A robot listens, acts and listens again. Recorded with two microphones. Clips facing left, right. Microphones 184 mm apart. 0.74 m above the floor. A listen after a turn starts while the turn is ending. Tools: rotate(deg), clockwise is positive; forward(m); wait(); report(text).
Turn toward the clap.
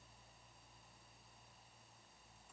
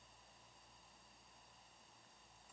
wait()
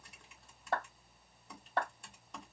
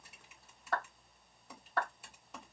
rotate(-30)
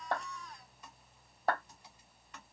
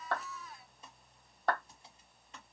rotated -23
report("Facing the clap.")